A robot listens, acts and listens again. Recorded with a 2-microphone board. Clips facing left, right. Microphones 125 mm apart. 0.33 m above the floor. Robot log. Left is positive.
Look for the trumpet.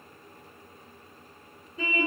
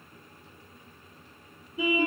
cmd idle
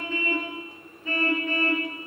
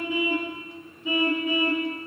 cmd idle
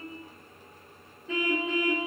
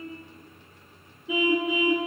end: I can't make out a trumpet, only a car horn.